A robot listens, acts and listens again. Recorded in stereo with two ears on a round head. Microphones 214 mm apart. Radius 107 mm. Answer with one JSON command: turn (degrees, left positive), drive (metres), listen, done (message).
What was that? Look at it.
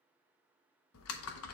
{"turn": 65}
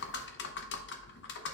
{"turn": 50}
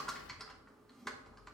{"done": "Facing the typing on a keyboard."}